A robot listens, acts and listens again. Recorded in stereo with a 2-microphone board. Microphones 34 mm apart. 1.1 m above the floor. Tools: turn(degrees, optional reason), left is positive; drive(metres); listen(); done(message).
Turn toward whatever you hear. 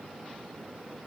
listen()
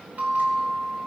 turn(degrees=-60, reason="The bell: about 60° right or 120° right.")
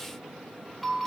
done("Found it: a bell, straight ahead.")